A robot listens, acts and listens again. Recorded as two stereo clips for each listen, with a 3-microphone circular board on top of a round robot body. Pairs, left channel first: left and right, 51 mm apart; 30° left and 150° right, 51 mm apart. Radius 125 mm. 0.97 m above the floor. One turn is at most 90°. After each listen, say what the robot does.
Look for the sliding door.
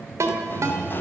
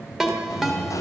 Turn 40° left.
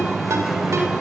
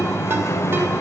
Found it: a sliding door, straight ahead.